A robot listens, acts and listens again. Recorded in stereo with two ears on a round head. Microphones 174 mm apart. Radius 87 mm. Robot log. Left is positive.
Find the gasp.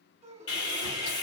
note: The gasp: about 30° right or 150° right.
cmd yaw -30
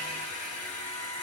cmd idle
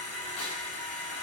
end: I heard a gasp, but can't make it out now. It was about straight ahead or 120° right.